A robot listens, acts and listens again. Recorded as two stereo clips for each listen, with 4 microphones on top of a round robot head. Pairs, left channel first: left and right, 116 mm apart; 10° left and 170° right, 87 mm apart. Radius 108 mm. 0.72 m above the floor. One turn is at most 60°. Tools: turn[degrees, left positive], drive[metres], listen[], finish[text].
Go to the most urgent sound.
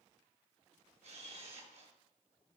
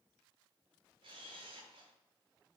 Action: listen[]
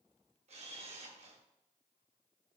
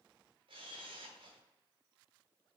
Action: listen[]
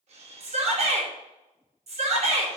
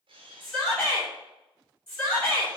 Thought: The shout: 75° right.
Action: turn[-60]
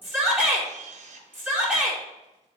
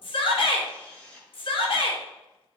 Thought: The shout is now 15° right.
Action: turn[-15]
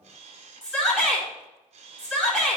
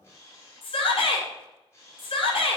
Action: drive[1.0]
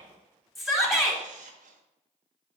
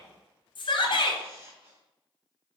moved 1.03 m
Action: drive[1.0]
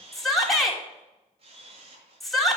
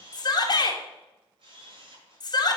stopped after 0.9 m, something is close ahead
Action: finish[I am next to the shout.]